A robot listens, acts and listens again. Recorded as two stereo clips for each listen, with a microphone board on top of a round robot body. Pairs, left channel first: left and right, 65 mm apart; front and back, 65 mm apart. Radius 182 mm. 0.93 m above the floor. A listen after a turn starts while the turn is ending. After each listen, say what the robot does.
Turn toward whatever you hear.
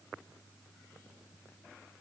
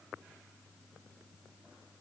Keep listening.
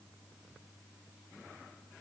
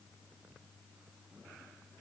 Keep listening.
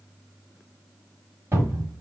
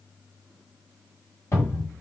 Turn 40° right.
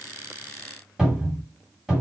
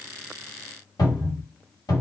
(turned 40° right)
Turn 10° right.
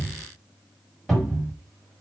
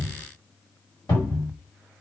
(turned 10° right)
Facing the cupboard door, 2 to 4 m away.